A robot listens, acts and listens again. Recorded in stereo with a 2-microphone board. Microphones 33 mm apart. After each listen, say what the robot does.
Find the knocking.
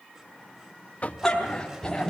Turn 45° left.
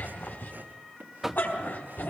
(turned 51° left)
Found it: knocking, straight ahead.